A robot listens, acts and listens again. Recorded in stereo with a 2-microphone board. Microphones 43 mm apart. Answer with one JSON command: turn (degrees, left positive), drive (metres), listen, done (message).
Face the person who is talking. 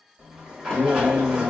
{"turn": -50}
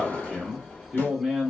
{"turn": -10}
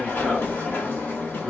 {"done": "Facing the man speaking."}